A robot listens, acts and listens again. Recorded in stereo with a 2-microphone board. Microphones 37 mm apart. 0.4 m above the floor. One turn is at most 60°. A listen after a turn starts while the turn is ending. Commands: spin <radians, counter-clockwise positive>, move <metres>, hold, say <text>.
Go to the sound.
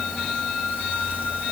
hold
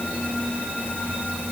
hold
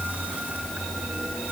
say I can't make out anything to turn to.